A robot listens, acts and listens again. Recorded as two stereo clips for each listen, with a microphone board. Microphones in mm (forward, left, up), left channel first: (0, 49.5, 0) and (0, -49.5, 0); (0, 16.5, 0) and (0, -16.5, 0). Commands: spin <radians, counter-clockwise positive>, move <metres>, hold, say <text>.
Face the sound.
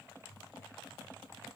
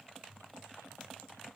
hold
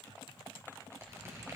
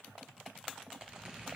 spin -0.52
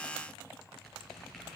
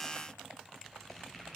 say Found it: a squeak, straight ahead, 2 to 4 m away.